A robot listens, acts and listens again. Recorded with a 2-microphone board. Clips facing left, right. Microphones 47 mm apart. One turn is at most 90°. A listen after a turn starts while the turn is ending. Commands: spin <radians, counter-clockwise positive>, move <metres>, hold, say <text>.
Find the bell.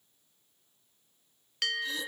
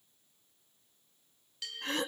spin 1.13
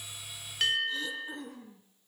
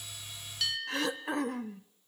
spin 0.79
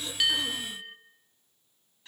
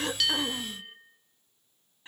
say Found it: a bell, straight ahead, 1 to 2 m away.